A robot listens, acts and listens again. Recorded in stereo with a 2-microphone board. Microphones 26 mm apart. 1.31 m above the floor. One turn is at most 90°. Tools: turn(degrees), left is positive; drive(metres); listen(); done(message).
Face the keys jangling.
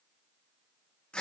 listen()
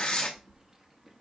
turn(degrees=-30)
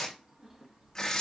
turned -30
turn(degrees=-30)
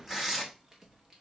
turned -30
turn(degrees=-15)
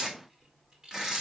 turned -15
turn(degrees=-20)
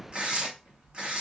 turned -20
turn(degrees=-90)
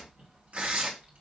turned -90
turn(degrees=-60)
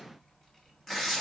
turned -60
done("Facing the keys jangling.")